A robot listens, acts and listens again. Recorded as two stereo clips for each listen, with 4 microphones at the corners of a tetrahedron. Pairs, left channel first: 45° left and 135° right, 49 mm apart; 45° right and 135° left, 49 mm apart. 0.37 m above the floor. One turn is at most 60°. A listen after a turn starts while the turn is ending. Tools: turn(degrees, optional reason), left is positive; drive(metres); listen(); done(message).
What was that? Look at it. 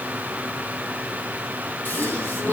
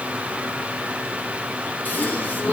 done("Found it: a gasp, straight ahead, 2 to 4 m away.")